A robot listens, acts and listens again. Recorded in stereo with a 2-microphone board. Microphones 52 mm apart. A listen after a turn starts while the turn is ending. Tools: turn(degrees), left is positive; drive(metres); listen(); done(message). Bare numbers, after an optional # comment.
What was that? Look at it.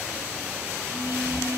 # The phone buzzing: about 70° right or 110° right.
turn(-70)
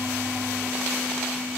done("Facing the phone buzzing, over 4 m away.")